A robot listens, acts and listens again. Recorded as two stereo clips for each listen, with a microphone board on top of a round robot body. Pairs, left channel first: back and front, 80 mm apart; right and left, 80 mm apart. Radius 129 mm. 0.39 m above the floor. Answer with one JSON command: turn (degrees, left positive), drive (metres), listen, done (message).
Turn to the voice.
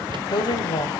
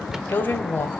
{"turn": -155}
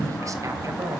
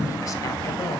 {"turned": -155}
{"listen": true}
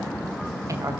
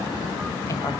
{"turn": -45}
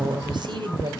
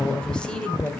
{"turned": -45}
{"turn": -10}
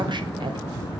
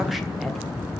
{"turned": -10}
{"listen": true}
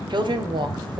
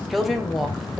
{"done": "Found it: a woman speaking, straight ahead."}